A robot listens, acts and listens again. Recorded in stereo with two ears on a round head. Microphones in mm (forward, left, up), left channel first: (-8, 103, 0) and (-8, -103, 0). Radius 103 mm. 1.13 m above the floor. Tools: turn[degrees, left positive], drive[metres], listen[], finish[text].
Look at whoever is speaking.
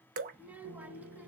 Action: turn[-30]
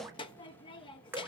Thought: So it is at 20° left.
Action: turn[20]
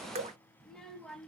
Action: finish[Found it: a child speaking, straight ahead.]